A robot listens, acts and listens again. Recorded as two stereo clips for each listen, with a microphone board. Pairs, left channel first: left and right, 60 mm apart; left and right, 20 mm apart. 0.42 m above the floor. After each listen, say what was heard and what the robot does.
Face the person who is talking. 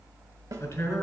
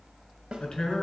The man speaking: about 45° left or 135° left. Turn 45° left.
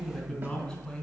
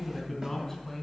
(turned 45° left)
Found it: a man speaking, straight ahead, 2 to 4 m away.